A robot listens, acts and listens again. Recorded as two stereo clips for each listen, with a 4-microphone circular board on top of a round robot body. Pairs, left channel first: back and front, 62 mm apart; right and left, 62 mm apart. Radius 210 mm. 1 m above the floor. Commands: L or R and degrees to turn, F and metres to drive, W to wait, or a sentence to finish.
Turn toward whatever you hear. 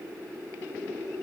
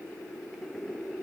W
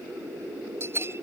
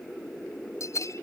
R50
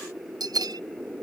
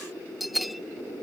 Found it: a bell, straight ahead.